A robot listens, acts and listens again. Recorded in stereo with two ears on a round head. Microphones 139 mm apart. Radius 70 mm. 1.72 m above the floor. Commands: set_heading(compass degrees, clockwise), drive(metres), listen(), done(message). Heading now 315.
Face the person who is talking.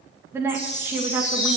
set_heading(345)
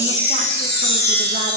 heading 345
listen()
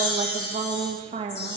set_heading(120)
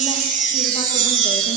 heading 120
listen()
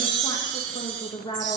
set_heading(95)
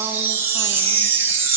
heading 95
listen()
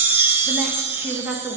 set_heading(110)
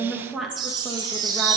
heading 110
done("Facing the woman speaking, 2 to 4 m away.")